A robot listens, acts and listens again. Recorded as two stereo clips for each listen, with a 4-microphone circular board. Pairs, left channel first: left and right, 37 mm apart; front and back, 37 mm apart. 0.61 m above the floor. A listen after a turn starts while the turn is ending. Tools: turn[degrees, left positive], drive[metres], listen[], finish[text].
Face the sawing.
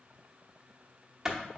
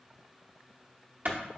Action: listen[]
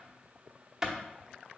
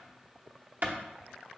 Action: listen[]
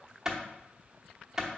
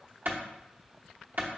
Action: finish[I can't make out sawing to turn to.]